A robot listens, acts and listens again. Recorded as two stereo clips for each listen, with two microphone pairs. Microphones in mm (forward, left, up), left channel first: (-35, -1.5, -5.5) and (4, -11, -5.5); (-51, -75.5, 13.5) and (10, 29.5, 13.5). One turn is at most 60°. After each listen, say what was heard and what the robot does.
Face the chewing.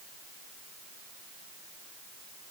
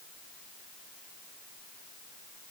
Keep listening.
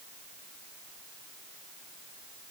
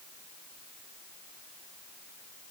Keep listening.
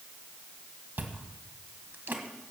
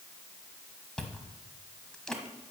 The chewing: 35° right. Turn 35° right.
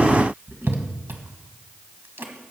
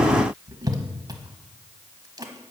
Facing the chewing.